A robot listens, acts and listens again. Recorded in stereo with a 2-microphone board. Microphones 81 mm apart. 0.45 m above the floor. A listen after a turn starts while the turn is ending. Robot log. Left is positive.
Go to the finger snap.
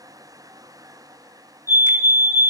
cmd idle
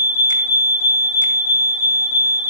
cmd idle
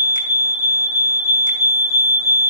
end: I can't make out a finger snap, only a fire alarm.